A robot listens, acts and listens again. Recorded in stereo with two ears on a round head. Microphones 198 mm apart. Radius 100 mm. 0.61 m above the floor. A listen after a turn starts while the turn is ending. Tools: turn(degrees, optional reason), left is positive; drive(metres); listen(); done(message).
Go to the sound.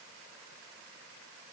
listen()
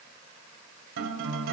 turn(degrees=-65, reason="The guitar: about 65° right or 115° right.")
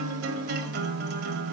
turn(degrees=-45, reason="So it is at 45° right.")
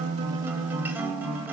turn(degrees=-10, reason="The guitar is now 10° right.")
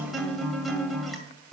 drive(metres=1.0)
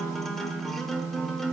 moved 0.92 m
drive(metres=1.0)
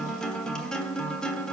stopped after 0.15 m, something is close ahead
done("I am next to the guitar.")